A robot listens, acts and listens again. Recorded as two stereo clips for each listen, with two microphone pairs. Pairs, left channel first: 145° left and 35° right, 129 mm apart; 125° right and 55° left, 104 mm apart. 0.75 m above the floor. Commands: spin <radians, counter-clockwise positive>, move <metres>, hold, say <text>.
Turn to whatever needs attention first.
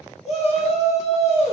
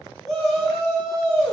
spin 2.62
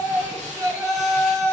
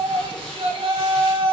spin 0.52
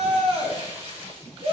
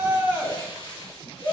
spin -0.17
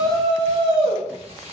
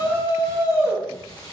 say Facing the shout.